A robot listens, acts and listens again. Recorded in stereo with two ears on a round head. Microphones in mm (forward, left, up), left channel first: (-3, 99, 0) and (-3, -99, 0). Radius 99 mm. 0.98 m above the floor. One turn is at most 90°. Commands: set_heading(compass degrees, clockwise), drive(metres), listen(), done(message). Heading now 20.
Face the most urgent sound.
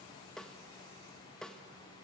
listen()
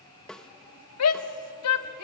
set_heading(290)
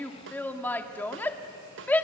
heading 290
set_heading(280)
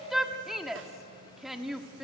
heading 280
done("Facing the shout, 1 to 2 m away.")